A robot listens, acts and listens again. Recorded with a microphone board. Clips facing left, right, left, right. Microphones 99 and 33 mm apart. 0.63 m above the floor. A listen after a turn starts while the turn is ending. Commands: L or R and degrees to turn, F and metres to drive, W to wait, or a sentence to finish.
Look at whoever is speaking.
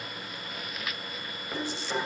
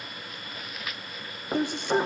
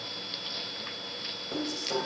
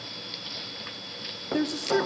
R55
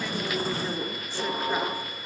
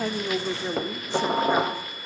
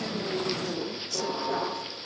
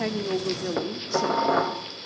R20
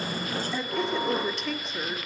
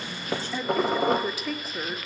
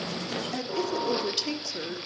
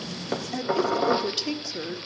Found it: a woman speaking, straight ahead, 1 to 2 m away.